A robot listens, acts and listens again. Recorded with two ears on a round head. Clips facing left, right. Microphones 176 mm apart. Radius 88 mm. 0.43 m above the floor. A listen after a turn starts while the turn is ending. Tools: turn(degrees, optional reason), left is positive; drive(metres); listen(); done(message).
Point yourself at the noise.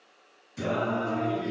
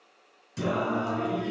turn(degrees=-65, reason="The singing: about 65° right or 115° right.")
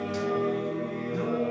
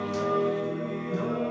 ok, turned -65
turn(degrees=-45, reason="So it is at 45° right.")
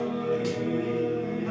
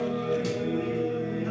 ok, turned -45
turn(degrees=-15, reason="The singing is now 15° right.")
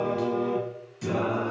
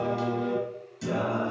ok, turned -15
done("Facing the singing, 1 to 2 m away.")